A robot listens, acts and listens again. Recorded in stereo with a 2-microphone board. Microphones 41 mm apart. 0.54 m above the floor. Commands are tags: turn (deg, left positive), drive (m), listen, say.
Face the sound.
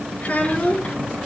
<turn deg="45"/>
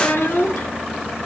<turn deg="95"/>
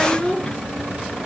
<turn deg="15"/>
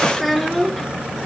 <say>Facing the child speaking, over 4 m away.</say>